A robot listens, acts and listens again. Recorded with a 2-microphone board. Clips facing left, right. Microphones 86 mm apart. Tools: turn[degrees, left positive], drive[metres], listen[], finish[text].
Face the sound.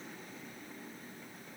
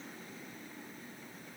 Action: listen[]
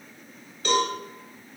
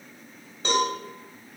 Thought: The cowbell: about 30° right or 150° right.
Action: turn[-30]
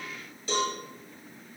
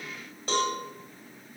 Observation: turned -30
Thought: So it is at 115° right.
Action: turn[-115]
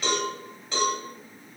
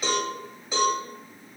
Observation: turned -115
Thought: The cowbell is now 10° right.
Action: turn[-10]
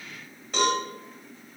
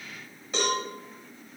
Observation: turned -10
Action: finish[Facing the cowbell, 1 to 2 m away.]